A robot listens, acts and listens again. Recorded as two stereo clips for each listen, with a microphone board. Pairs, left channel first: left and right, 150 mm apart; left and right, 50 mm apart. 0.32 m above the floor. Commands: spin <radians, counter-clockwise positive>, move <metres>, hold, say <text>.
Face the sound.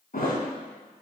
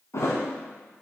spin 1.31
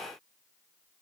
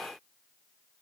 hold
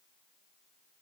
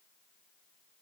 say I heard a thud, but can't make it out now. It was about straight ahead or 30° left.